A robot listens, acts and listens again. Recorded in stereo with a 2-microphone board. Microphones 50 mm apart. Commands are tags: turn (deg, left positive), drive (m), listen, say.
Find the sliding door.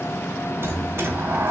<turn deg="-55"/>
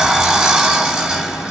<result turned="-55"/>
<turn deg="-10"/>
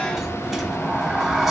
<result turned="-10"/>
<say>Facing the sliding door, 1 to 2 m away.</say>